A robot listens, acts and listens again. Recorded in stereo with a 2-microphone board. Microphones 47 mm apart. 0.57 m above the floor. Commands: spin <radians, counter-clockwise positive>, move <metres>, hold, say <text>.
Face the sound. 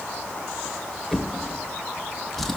spin 0.52
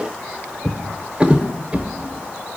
spin -0.44
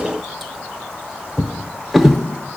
say Facing the drawer.